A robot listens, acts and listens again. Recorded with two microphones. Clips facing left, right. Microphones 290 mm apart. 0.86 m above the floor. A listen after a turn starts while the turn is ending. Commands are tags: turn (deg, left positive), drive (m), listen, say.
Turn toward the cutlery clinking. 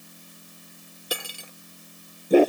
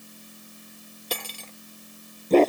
<turn deg="30"/>
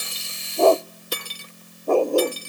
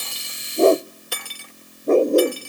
<turn deg="140"/>
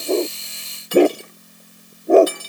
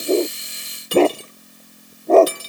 <turn deg="-35"/>
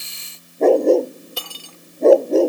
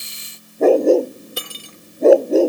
<turn deg="-20"/>
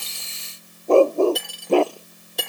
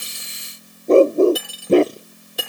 <say>Found it: cutlery clinking, straight ahead.</say>